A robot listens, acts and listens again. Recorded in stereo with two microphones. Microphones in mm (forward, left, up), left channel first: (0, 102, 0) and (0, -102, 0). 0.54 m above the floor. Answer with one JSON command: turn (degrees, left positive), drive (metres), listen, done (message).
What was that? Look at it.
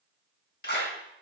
{"turn": 55}
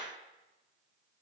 {"listen": true}
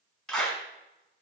{"done": "Found it: a clap, straight ahead."}